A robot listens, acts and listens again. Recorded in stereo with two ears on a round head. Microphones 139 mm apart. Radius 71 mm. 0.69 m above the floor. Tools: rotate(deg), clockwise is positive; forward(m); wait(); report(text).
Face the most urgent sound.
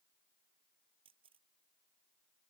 wait()
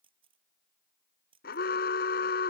rotate(-70)
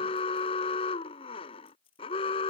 rotate(-35)
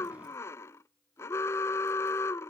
rotate(-15)
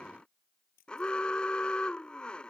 report("Found it: an alarm, straight ahead.")